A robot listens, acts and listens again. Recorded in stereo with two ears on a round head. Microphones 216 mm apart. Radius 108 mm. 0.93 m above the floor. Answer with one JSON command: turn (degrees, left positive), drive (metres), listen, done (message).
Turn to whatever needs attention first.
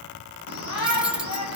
{"turn": 90}
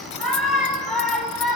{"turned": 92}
{"done": "Facing the shout, over 4 m away."}